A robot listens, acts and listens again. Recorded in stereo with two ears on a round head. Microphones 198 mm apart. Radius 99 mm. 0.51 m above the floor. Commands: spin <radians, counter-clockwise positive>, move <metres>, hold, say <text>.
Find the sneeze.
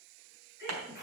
spin -0.26
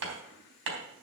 hold
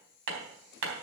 say I heard a sneeze, but can't make it out now. It was about straight ahead or 150° right.